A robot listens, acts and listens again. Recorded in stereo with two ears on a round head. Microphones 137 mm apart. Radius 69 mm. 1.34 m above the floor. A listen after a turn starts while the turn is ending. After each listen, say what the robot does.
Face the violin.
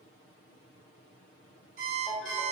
Keep listening.
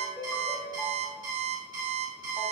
Keep listening.
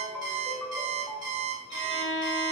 Turn 90° left.
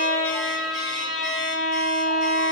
Facing the violin.